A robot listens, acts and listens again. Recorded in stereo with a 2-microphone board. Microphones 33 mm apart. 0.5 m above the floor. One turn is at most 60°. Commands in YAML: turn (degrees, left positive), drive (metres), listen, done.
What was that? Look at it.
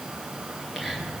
turn: -30
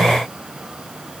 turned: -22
listen: true
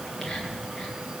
turn: 15
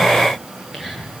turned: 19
done: "Found it: whispering, straight ahead, over 4 m away."